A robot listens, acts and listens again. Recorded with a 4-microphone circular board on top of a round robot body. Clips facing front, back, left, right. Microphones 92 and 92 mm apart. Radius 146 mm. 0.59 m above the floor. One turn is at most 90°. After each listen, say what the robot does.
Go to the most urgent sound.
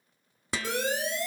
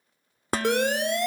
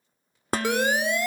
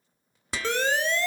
Turn 90° left.
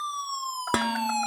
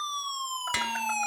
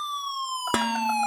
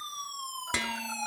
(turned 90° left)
Turn 80° left.
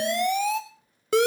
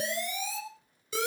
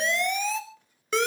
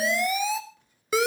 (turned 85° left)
Drive 1.0 m forward.
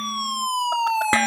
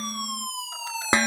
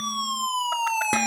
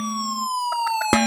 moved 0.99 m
Turn 10° right.
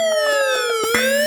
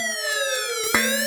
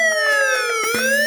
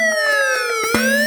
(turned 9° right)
Drive 1.0 m forward.
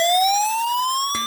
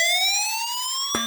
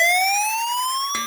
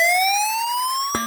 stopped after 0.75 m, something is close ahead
I am next to the siren.